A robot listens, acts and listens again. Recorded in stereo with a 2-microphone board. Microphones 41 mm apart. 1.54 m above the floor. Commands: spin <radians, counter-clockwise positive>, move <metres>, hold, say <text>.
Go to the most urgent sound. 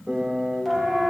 spin 0.52
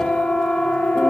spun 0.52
spin 2.53
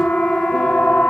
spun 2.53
spin 0.52
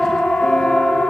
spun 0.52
spin 0.26
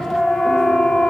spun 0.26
move 1.0
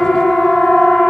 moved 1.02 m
move 1.0
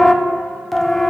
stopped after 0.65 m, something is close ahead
say Arrived at the siren, straight ahead.